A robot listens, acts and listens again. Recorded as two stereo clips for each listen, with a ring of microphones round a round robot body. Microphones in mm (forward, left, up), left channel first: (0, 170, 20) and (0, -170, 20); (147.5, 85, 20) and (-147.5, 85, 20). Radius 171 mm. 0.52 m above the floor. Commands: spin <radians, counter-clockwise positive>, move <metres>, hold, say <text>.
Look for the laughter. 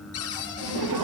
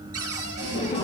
spin -1.31
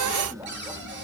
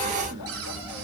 hold
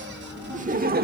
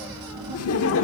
spin -0.61
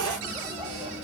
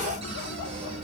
hold
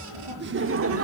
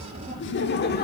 spin -0.96
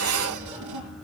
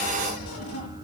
hold
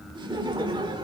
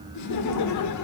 spin -0.26
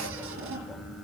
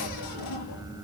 hold
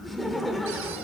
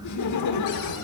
say Found it: laughter, straight ahead.